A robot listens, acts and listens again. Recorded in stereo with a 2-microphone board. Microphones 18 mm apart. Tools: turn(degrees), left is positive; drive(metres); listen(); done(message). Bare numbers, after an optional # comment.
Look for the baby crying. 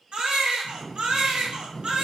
# The baby crying: about 70° right or 110° right.
turn(-70)
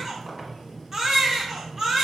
# So it is at 30° right.
turn(-30)
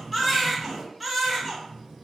done("Found it: a baby crying, straight ahead, under 1 m away.")